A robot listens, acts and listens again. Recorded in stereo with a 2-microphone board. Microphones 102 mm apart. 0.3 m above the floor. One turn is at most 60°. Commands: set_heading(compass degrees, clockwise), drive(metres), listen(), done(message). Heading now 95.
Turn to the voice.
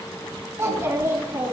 set_heading(125)
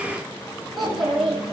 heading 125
done("Found it: a child speaking, straight ahead.")